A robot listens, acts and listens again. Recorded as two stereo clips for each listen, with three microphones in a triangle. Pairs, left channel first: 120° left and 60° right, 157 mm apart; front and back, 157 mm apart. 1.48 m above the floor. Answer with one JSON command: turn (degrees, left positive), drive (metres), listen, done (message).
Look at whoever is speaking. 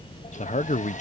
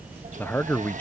{"turn": 75}
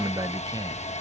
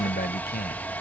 {"done": "Facing the man speaking."}